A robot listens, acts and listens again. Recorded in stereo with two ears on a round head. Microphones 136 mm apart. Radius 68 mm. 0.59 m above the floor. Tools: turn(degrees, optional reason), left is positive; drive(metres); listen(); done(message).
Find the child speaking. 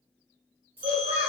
turn(degrees=-30)
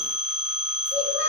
turn(degrees=15, reason="So it is at 15° left.")
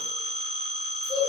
done("Found it: a child speaking, straight ahead, 1 to 2 m away.")